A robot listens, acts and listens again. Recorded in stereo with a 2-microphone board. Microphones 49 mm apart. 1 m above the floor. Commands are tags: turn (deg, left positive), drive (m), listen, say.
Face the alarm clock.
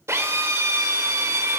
<listen/>
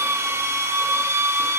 <listen/>
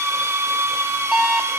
<turn deg="-30"/>
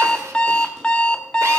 <turn deg="20"/>
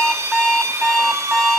<say>Facing the alarm clock.</say>